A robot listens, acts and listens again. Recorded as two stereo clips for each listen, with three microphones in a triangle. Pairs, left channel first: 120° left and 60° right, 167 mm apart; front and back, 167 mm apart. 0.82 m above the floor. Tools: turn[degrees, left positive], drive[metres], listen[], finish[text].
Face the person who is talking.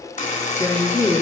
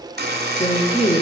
Thought: The woman speaking: 50° left.
Action: turn[50]
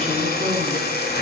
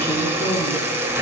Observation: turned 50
Action: listen[]
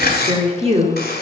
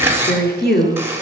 Thought: The woman speaking is now 10° right.
Action: turn[-10]
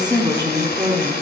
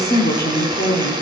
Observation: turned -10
Action: finish[Facing the woman speaking.]